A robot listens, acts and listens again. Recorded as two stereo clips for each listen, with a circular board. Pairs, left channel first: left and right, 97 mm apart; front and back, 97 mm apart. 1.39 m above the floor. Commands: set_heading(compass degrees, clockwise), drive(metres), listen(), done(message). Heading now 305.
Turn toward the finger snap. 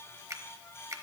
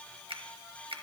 set_heading(95)
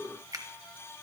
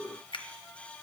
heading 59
set_heading(99)
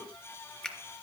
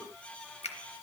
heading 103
done("Found it: a finger snap, straight ahead, under 1 m away.")